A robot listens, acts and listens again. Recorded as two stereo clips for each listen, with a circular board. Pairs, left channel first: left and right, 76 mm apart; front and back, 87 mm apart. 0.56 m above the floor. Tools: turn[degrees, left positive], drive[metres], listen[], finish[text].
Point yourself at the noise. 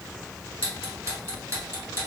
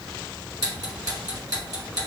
Thought: The ticking: 140° right.
Action: turn[-140]
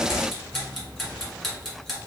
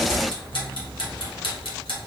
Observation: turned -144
Action: finish[Facing the ticking.]